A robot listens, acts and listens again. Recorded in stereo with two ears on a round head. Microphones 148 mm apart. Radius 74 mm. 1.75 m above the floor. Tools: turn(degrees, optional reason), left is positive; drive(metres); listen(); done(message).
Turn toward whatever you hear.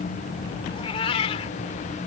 turn(degrees=35, reason="The cat meowing: about 35° left or 145° left.")
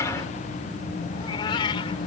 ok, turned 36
turn(degrees=30, reason="The cat meowing: about 30° left or 150° left.")
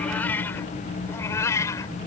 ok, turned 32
turn(degrees=20, reason="So it is at 20° left.")
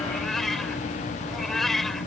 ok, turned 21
done("Facing the cat meowing.")